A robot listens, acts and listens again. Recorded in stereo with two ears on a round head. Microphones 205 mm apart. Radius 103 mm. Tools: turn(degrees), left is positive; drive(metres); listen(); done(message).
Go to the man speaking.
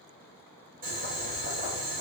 listen()
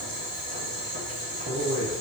turn(degrees=-75)
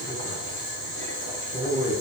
turn(degrees=-25)
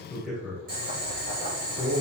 drive(metres=1.0)
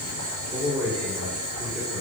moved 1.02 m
turn(degrees=-10)
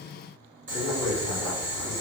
drive(metres=1.0)
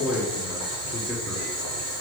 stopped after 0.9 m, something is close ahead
done("I am next to the man speaking.")